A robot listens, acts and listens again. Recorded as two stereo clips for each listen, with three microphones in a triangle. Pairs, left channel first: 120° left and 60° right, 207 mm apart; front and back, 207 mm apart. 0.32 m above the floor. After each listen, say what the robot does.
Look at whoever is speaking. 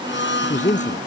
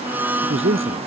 Turn 175° left.
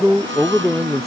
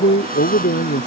Turn 30° left.
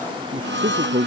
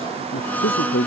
Turn 10° right.
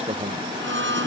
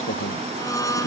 Facing the man speaking.